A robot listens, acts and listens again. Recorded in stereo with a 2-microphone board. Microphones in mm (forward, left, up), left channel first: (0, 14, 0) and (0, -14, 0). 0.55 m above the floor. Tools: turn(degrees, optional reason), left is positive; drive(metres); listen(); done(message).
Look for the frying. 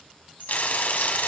turn(degrees=70, reason="The frying: about 70° left or 110° left.")
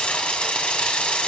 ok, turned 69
turn(degrees=40, reason="So it is at 40° left.")
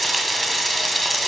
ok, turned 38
done("Found it: frying, straight ahead, 1 to 2 m away.")